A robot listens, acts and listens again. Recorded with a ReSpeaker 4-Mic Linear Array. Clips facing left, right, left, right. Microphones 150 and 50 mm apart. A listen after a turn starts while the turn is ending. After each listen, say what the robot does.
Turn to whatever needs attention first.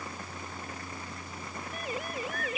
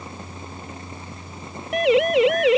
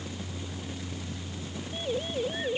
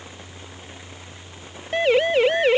Turn 90° right.
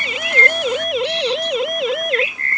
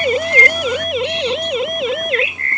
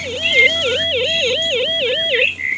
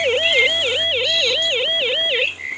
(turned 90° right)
Found it: a siren, straight ahead.